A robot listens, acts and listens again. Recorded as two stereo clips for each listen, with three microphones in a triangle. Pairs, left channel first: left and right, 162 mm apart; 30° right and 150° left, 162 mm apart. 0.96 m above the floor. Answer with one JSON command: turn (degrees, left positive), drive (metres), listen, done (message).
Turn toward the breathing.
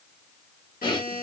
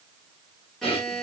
{"turn": 25}
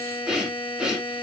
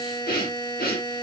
{"done": "Facing the breathing, 1 to 2 m away."}